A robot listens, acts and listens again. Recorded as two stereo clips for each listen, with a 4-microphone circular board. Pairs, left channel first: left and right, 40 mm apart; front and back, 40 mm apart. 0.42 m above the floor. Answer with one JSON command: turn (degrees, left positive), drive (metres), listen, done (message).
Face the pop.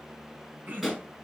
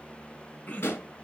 {"done": "Facing the pop, over 4 m away."}